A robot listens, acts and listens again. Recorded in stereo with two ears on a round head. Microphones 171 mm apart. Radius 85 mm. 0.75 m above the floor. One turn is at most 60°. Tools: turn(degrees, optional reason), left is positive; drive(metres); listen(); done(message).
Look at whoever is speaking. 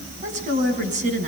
turn(degrees=-40, reason="The woman speaking: about 40° right or 140° right.")
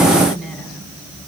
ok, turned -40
done("Facing the woman speaking.")